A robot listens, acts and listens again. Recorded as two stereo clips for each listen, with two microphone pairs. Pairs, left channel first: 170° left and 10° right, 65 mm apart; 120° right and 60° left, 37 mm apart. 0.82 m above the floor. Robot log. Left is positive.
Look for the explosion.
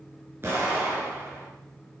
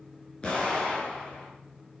note: The explosion: 60° right.
cmd yaw -60
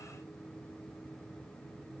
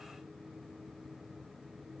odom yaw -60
end: I heard an explosion from this way, but can't make it out now.